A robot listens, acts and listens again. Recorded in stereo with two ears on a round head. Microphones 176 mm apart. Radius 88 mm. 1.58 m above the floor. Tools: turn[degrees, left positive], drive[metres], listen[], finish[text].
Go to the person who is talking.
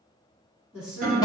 Action: turn[-30]
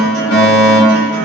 Action: listen[]
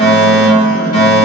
Action: listen[]
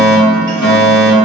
Action: finish[I heard a woman speaking, but can't make it out now. It was about 20° left or 140° right. I did not reach it.]